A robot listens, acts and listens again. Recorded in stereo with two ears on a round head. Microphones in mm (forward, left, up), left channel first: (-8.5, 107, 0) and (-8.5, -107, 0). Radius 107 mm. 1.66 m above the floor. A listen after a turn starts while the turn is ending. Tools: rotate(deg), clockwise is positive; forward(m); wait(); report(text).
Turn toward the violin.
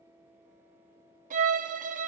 rotate(35)
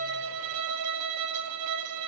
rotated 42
rotate(105)
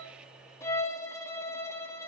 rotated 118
rotate(-10)
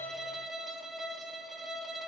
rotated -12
report("Found it: a violin, straight ahead, under 1 m away.")